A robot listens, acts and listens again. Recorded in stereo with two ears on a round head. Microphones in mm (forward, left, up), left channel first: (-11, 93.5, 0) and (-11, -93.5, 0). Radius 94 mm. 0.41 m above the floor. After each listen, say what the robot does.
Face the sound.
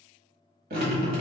Turn 50° right.
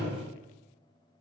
Turn 80° right.
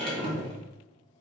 Turn 35° right.
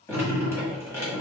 Turn 15° left.
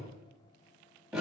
Found it: dripping, straight ahead, 1 to 2 m away.